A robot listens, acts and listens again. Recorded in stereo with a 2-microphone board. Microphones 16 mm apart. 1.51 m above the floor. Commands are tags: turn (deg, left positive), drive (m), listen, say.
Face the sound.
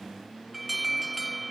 <turn deg="-30"/>
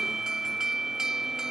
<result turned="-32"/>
<turn deg="-140"/>
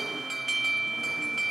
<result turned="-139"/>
<say>Found it: an alarm, straight ahead.</say>